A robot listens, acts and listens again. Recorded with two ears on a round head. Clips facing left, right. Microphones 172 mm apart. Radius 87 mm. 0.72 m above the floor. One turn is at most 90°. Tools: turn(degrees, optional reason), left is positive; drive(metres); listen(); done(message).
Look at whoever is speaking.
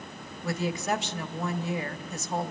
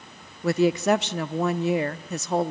turn(degrees=-55, reason="The woman speaking: about 55° right or 125° right.")
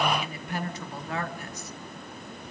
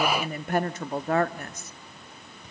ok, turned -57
turn(degrees=-50, reason="So it is at 50° right.")
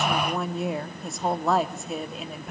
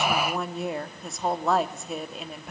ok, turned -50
done("Found it: a woman speaking, straight ahead, 1 to 2 m away.")